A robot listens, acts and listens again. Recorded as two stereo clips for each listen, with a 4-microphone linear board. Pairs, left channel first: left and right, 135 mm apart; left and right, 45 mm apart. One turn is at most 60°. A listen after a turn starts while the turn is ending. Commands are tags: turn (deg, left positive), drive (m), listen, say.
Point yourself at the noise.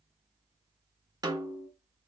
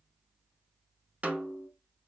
<turn deg="-30"/>
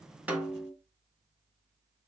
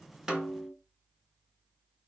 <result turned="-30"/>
<say>Found it: a snare drum, straight ahead.</say>